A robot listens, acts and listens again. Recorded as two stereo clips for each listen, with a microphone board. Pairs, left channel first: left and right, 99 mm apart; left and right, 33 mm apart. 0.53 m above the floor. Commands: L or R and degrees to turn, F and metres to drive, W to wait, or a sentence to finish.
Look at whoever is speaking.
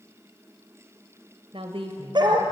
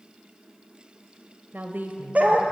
R70
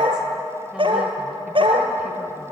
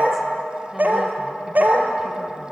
W
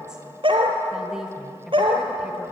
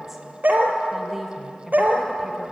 Facing the woman speaking.